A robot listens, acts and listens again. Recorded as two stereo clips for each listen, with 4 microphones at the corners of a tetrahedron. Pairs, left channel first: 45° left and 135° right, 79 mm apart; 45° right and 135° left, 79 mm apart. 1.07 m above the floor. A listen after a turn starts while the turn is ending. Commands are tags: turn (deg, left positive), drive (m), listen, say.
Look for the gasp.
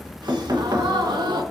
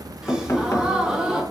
<turn deg="-145"/>
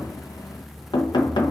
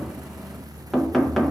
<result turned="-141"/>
<say>Facing where the gasp came from. I can't hear it now.</say>